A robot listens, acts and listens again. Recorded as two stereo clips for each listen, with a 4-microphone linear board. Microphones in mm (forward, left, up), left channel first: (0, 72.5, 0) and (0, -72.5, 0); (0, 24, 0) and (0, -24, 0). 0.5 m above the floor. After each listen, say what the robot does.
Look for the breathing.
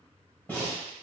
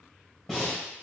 Turn 30° left.
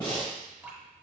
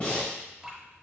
Turn 140° left.
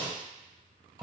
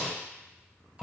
Found it: breathing, straight ahead, 2 to 4 m away.